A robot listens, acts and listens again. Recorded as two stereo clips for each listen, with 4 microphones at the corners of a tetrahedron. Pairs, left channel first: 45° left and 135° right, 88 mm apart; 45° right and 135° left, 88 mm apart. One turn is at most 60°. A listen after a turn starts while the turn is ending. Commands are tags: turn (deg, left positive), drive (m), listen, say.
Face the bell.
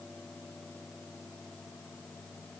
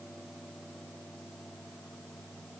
<listen/>
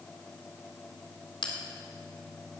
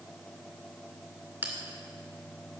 <turn deg="60"/>
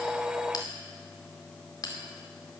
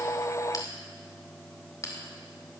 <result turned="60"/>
<say>Facing the bell, 2 to 4 m away.</say>